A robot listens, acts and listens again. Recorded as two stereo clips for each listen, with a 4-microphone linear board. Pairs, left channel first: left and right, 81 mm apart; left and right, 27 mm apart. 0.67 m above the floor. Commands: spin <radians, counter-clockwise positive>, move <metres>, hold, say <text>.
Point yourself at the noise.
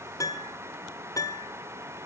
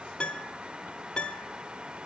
spin 0.70
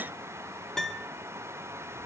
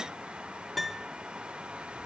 say Facing the piano, 1 to 2 m away.